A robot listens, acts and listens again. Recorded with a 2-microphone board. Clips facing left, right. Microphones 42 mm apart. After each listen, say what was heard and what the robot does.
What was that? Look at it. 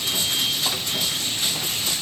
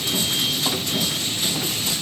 Keep listening.
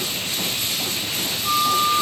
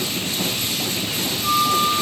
The flute: about 75° right or 105° right. Turn 75° right.
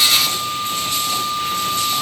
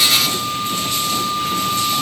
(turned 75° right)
So it is at 15° right. Turn 15° right.
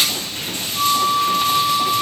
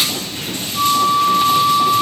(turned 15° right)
Found it: a flute, straight ahead.